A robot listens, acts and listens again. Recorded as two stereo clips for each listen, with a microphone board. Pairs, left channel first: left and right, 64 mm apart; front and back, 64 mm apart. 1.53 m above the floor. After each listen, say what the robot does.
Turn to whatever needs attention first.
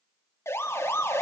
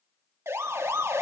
Turn 135° left.
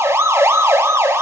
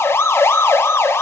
Turn 45° right.
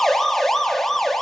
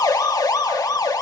Found it: a siren, straight ahead, 2 to 4 m away.